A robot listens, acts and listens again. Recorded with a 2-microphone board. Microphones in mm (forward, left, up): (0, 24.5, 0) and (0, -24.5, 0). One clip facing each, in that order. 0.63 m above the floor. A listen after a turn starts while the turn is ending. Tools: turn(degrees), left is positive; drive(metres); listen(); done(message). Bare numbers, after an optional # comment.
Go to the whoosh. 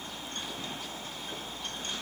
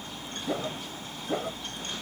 turn(-90)
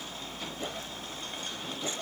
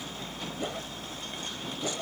# So it is at 10° right.
turn(-10)
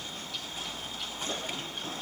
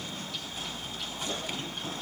listen()
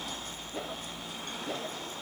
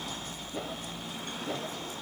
drive(1.0)
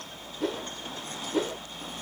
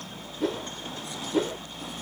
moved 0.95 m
drive(1.0)
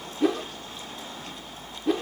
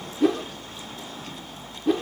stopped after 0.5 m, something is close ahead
done("I am next to the whoosh.")